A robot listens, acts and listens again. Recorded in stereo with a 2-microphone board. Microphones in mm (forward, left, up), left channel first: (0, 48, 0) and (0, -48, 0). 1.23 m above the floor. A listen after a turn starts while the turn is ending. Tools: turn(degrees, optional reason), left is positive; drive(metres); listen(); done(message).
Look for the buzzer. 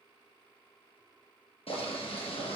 listen()
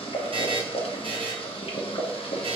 turn(degrees=-65, reason="The buzzer: about 65° right or 115° right.")
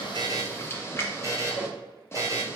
turn(degrees=-35, reason="So it is at 35° right.")
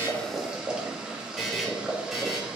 done("Found it: a buzzer, straight ahead, under 1 m away.")